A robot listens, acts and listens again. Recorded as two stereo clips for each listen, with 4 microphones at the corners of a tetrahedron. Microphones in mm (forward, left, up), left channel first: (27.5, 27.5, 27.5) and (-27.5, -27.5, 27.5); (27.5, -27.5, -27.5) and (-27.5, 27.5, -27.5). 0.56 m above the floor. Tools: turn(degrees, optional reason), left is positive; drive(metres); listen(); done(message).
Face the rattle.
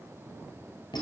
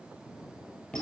listen()
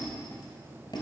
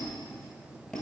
listen()
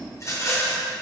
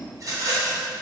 turn(degrees=95, reason="The rattle: 95° left.")
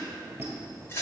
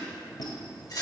turn(degrees=-15, reason="The rattle is now 15° right.")
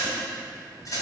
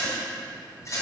done("Found it: a rattle, straight ahead, 2 to 4 m away.")